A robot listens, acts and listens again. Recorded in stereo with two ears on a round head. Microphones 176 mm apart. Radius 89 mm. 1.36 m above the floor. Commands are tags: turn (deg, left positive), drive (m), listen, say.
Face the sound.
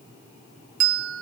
<turn deg="-70"/>
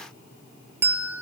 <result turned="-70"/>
<turn deg="-10"/>
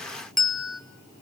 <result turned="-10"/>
<say>Facing the bell.</say>